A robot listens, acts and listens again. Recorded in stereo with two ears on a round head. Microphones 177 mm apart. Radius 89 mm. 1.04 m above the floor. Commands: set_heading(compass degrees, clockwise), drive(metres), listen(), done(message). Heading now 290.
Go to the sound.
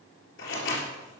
set_heading(220)
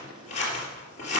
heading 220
set_heading(185)
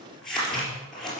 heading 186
drive(1.0)
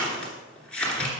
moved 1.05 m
drive(1.0)
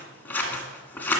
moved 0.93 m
set_heading(176)
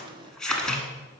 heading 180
drive(1.0)
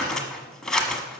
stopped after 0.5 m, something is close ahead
done("Arrived at the scissors, straight ahead.")